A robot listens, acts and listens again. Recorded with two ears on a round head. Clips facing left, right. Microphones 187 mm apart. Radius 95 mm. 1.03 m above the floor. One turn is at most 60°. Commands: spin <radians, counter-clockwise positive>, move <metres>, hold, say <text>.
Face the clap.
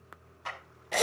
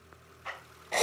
spin 1.05
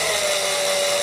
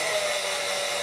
hold
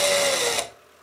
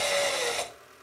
hold
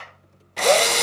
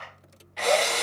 spin 1.05
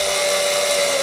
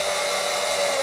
hold
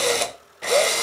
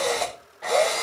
hold
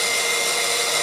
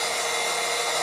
say Facing where the clap came from. I can't hear it now.